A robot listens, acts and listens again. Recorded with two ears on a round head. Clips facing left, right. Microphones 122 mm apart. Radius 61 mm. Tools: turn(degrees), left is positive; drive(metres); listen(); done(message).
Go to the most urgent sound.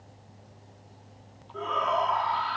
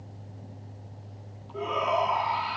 turn(degrees=-30)
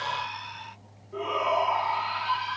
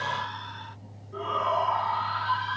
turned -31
turn(degrees=15)
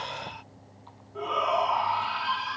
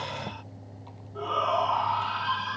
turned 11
drive(metres=1.0)
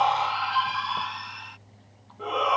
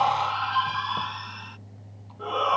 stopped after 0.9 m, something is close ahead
done("Blocked. The shout is further on, straight ahead.")